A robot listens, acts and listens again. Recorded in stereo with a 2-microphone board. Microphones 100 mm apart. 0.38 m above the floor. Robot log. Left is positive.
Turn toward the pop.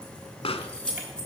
note: The pop: about 70° left or 110° left.
cmd yaw +70
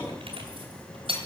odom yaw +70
cmd idle
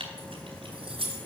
end: I heard a pop, but can't make it out now. It was about straight ahead or 40° left.